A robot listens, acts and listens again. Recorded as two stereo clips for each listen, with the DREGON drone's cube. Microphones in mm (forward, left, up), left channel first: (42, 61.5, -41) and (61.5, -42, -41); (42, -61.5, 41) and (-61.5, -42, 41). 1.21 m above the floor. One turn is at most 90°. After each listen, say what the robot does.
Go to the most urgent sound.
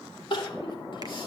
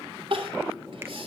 Turn 90° left.
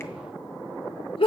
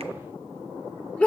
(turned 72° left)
Turn 65° left.
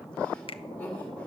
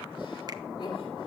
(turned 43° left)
Turn 20° left.
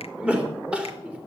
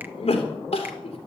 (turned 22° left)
Drive 1.0 m forward.
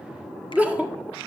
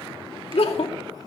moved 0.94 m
Drive 1.0 m forward.
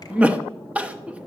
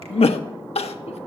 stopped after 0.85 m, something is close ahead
Arrived at the crying, straight ahead.